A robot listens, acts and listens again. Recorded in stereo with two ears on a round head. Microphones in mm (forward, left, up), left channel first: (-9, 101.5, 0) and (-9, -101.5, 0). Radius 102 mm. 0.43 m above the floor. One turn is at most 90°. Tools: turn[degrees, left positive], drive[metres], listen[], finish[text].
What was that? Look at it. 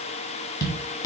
Thought: The tapping: about 15° left or 165° left.
Action: turn[15]
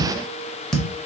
Action: finish[Found it: tapping, straight ahead.]